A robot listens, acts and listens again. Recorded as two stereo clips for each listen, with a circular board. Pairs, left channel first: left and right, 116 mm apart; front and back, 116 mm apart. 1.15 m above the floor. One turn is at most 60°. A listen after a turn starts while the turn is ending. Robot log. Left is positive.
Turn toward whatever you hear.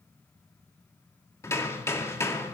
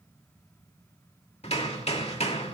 note: The hammering: 25° left.
cmd yaw +25
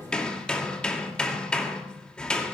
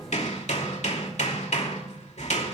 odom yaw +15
note: The hammering is now 10° left.
cmd yaw +10
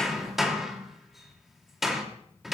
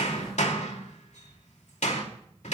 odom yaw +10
end: Facing the hammering, 2 to 4 m away.